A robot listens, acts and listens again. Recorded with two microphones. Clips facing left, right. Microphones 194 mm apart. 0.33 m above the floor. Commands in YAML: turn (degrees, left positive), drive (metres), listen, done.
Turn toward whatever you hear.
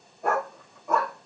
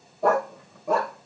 turn: -90
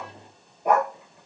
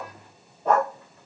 turn: 15
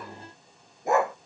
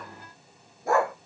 turn: 25
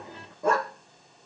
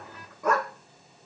turn: 35
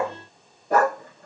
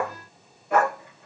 turn: 45
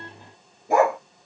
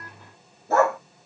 turn: 15
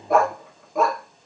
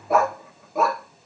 done: "Facing the dog barking."